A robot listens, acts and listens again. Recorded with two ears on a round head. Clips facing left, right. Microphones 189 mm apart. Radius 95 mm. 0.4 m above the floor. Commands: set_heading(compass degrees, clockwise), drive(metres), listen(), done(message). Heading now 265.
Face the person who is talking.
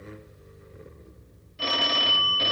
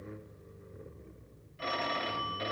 listen()
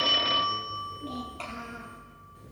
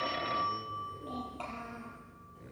set_heading(240)
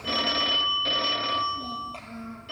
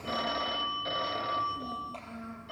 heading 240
done("Facing the child speaking, over 4 m away.")